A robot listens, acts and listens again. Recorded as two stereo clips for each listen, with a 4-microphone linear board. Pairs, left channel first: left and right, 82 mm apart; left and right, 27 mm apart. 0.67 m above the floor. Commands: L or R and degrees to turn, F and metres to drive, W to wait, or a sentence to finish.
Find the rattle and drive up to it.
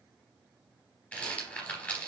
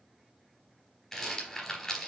L15
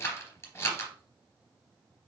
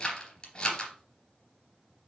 L150
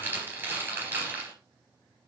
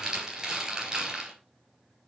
R25
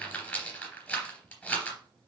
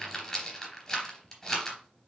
L15
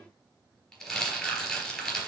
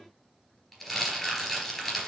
F1.0
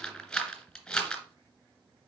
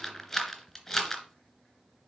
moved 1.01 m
F1.0
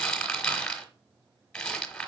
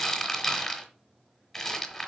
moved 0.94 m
L10
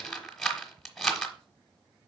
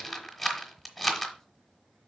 F1.0
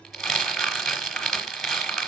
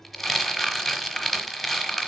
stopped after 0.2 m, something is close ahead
Arrived at the rattle, straight ahead.